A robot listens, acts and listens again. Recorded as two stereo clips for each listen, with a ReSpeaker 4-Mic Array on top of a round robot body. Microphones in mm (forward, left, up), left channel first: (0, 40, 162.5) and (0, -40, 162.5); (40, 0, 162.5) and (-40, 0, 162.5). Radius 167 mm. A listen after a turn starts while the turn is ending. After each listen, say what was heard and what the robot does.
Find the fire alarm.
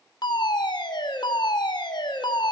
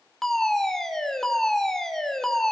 The fire alarm: 85° left. Turn 85° left.
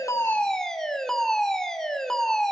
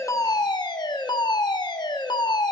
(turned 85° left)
Found it: a fire alarm, straight ahead, 2 to 4 m away.